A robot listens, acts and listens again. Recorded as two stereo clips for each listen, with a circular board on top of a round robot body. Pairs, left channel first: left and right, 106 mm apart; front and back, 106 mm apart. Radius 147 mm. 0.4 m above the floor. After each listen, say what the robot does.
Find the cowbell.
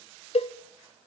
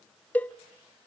Turn 75° left.
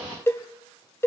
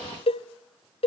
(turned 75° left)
Turn 25° left.
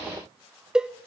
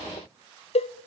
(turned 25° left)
Facing the cowbell.